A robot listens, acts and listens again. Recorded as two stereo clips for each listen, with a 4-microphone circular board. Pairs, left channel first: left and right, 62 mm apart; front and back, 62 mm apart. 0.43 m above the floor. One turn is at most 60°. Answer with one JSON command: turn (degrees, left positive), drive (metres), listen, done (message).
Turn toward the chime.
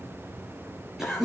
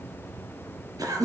{"listen": true}
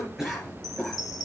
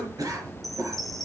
{"turn": 60}
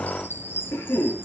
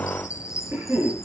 {"turn": 35}
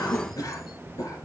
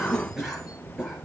{"listen": true}
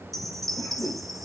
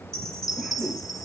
{"done": "Facing the chime, 1 to 2 m away."}